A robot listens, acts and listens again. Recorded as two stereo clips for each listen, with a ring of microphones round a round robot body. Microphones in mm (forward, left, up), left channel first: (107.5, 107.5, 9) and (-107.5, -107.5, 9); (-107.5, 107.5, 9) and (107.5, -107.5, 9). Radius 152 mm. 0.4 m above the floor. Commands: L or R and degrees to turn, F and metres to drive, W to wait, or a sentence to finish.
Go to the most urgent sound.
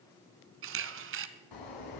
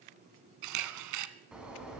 L40
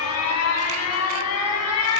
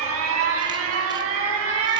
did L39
F1.0
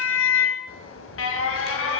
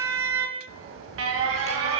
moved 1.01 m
F1.0
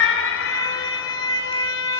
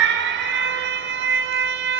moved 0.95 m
F1.0
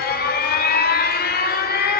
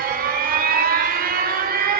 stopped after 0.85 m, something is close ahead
Arrived at the alarm, straight ahead.